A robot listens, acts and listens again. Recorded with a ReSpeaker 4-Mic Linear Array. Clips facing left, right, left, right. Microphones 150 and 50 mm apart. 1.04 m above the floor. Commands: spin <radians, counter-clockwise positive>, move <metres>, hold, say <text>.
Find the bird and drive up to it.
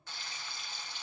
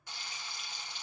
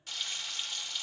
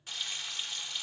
hold
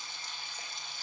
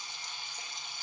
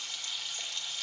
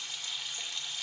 hold
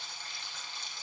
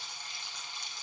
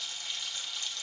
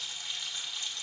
say I can't make out a bird, only frying.